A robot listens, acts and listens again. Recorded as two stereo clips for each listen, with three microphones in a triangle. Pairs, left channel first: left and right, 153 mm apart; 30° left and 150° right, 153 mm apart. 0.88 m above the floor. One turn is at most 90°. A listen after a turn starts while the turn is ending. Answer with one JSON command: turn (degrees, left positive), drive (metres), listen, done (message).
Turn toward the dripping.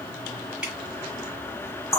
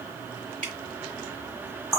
{"turn": -90}
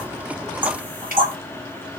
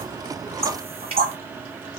{"turn": -85}
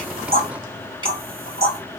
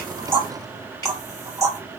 {"turn": -35}
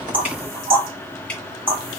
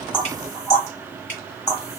{"done": "Found it: dripping, straight ahead."}